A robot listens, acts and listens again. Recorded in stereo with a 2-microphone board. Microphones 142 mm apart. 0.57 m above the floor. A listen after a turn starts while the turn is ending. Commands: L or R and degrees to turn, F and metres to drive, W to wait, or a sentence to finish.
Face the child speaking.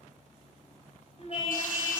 L45
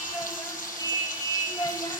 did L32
L25
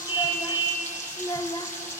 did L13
L35
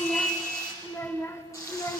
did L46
L20
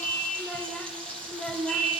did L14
Found it: a child speaking, straight ahead, 1 to 2 m away.